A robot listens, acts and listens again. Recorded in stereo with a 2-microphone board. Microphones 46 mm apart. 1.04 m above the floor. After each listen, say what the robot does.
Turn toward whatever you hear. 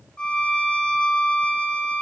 Turn 20° left.
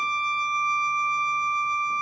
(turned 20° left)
Facing the violin.